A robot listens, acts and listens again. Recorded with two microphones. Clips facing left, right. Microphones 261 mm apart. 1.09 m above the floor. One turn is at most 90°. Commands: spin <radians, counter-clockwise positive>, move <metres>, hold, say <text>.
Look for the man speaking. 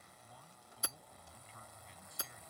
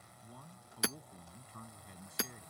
spin -0.87
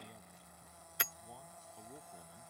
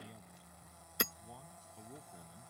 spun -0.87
say Found it: a man speaking, straight ahead.